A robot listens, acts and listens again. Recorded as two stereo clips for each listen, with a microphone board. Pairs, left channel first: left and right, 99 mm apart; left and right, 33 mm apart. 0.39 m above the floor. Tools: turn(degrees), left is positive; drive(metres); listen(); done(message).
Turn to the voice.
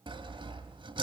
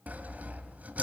listen()
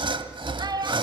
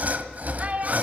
turn(degrees=-45)
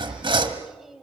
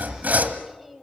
done("Found it: a child speaking, straight ahead.")